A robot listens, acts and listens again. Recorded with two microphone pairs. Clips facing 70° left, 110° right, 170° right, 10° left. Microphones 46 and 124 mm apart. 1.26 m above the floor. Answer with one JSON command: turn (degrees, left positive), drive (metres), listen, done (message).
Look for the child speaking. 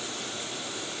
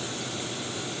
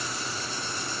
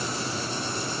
{"listen": true}
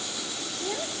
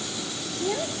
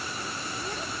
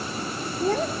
{"turn": -30}
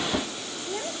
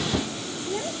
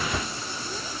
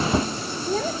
{"turn": -20}
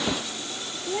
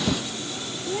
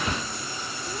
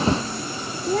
{"done": "Found it: a child speaking, straight ahead."}